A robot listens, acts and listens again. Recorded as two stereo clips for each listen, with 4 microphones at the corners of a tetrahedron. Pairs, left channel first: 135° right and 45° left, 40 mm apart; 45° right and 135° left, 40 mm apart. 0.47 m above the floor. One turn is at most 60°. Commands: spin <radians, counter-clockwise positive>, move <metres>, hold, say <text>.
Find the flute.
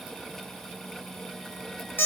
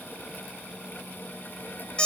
hold
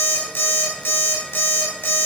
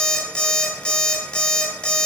hold
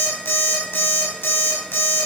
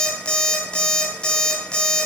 say I can't make out a flute, only an alarm clock.